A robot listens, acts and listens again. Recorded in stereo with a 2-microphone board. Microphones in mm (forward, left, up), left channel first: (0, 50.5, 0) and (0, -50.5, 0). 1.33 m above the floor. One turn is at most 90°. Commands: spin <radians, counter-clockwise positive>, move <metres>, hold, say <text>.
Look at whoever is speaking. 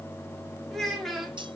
spin 0.52
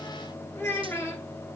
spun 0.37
spin 1.57
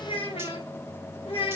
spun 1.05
spin 1.57
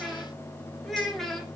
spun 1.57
say Facing the child speaking, 1 to 2 m away.